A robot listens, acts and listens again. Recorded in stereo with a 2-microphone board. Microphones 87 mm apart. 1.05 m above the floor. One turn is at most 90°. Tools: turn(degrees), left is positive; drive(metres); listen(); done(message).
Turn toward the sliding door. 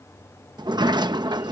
turn(degrees=-55)
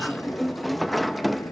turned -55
done("Found it: a sliding door, straight ahead.")